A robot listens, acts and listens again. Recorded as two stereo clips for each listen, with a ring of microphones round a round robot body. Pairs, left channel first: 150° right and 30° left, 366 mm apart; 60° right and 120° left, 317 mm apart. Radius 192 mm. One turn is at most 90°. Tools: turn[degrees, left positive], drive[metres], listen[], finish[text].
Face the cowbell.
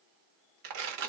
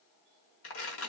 Action: listen[]
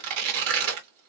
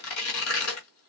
Action: listen[]
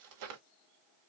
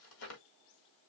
Action: finish[I can't make out a cowbell, only tearing paper.]